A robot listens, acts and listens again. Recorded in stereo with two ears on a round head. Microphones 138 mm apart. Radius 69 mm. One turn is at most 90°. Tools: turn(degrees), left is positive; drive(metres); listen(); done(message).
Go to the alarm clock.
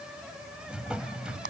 listen()
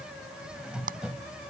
listen()
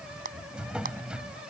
done("I can't make out an alarm clock, only a drawer and a clap.")